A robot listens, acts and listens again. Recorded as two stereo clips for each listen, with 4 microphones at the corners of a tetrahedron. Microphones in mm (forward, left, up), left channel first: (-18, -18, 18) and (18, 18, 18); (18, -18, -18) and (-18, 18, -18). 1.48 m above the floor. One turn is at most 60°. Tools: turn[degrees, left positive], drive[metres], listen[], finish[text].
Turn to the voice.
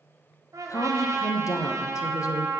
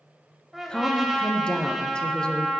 Thought: The woman speaking: 120° right.
Action: turn[-60]
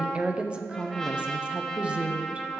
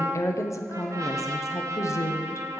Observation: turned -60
Thought: The woman speaking is now 25° right.
Action: turn[-25]
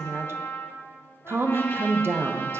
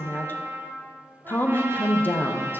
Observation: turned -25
Action: finish[Found it: a woman speaking, straight ahead.]